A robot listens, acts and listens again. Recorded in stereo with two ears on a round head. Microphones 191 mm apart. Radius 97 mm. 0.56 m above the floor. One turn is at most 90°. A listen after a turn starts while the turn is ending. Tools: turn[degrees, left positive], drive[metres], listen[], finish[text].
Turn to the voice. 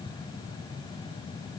Action: listen[]
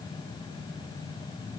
Action: listen[]
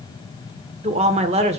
Thought: The woman speaking: about 30° right or 150° right.
Action: turn[-30]
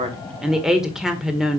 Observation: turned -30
Action: finish[Facing the woman speaking, 1 to 2 m away.]